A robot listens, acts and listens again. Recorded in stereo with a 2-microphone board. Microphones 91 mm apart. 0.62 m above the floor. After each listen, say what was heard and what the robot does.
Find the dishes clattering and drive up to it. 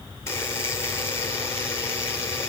Keep listening.
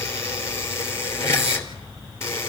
Keep listening.
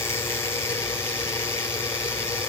I can't make out dishes clattering to turn to.